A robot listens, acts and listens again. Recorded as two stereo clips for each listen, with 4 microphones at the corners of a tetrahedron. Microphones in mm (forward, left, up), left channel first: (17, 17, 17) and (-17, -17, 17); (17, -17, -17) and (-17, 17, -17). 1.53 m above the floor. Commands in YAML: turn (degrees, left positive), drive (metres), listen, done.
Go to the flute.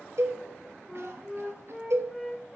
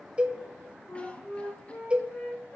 turn: -45
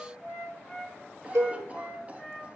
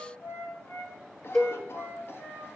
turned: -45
turn: -15
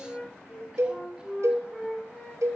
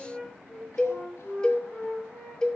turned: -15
drive: 1.0
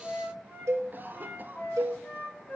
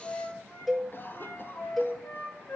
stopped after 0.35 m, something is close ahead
done: "Blocked. The flute is further on, straight ahead."